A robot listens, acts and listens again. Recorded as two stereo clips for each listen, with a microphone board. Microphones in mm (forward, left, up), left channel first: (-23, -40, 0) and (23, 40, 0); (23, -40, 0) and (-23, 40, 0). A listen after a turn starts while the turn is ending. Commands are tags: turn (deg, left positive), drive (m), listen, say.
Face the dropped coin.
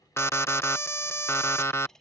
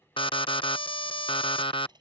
<turn deg="155"/>
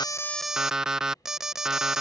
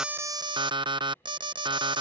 <say>Facing where the dropped coin came from. I can't hear it now.</say>